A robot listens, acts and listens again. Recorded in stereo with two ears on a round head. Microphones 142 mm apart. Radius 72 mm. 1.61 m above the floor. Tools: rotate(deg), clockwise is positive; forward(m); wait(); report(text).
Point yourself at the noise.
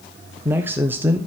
rotate(30)
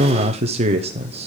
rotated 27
rotate(140)
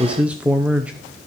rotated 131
rotate(10)
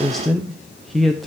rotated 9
report("Facing the man speaking, under 1 m away.")